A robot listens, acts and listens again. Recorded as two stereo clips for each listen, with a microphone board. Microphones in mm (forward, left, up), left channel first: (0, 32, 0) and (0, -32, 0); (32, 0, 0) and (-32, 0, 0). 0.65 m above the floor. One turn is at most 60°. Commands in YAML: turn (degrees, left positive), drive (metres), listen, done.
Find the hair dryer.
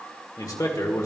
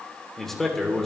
listen: true
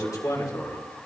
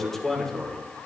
listen: true
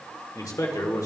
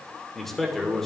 done: "I can't make out a hair dryer to turn to."